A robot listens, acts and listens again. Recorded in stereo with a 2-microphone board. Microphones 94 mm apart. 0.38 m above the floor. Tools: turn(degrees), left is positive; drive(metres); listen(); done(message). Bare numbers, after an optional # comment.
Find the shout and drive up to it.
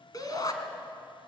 # The shout: about 40° left or 140° left.
turn(40)
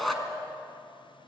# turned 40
drive(1.0)
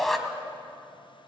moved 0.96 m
drive(1.0)
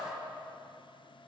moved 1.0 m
listen()
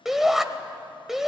drive(1.0)
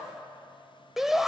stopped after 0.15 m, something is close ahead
done("Arrived at the shout, straight ahead.")